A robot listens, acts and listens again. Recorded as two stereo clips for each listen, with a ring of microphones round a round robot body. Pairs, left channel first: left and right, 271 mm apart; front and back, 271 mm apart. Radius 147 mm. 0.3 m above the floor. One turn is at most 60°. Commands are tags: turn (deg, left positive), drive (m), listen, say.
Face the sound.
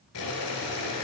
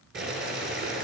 <turn deg="60"/>
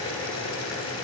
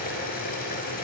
<turn deg="55"/>
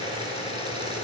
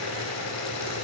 <turn deg="20"/>
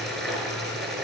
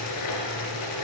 <say>Facing the boiling.</say>